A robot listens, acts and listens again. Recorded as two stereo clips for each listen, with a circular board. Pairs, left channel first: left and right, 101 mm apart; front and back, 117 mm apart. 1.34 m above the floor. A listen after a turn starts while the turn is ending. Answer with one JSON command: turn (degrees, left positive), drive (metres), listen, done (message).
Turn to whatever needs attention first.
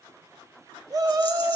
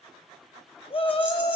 {"turn": -35}
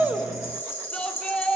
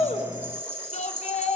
{"turn": 10}
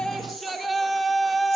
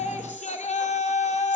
{"done": "Found it: a shout, straight ahead."}